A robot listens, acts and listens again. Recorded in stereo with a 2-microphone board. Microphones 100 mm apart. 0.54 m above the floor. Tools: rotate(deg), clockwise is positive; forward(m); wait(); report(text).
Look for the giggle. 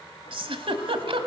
rotate(65)
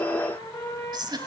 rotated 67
rotate(50)
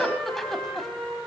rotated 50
report("Facing the giggle, 1 to 2 m away.")